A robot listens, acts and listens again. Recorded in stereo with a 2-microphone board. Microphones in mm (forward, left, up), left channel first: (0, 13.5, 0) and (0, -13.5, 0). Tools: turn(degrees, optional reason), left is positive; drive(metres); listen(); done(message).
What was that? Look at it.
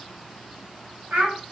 turn(degrees=-90)
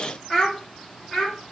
done("Facing the child speaking.")